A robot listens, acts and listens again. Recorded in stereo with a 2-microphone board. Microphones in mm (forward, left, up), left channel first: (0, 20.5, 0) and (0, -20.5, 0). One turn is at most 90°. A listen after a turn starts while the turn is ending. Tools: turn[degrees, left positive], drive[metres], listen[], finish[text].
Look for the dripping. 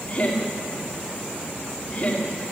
Action: listen[]
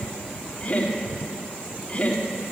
Action: listen[]
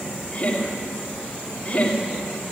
Action: finish[I can't make out dripping, only laughter.]